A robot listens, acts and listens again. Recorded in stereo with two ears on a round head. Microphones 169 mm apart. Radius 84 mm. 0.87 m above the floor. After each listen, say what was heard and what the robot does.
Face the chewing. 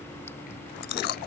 The chewing: about 60° left or 120° left. Turn 60° left.
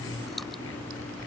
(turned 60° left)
Keep listening.
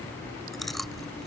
Found it: chewing, straight ahead.